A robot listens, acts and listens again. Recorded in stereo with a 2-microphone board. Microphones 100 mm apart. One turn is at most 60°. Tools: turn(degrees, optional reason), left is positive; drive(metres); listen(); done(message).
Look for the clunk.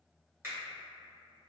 listen()
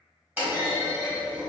turn(degrees=-20, reason="The clunk: about 20° right or 160° right.")
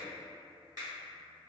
listen()
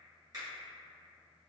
done("I heard a clunk, but can't make it out now. It was about straight ahead or 140° right.")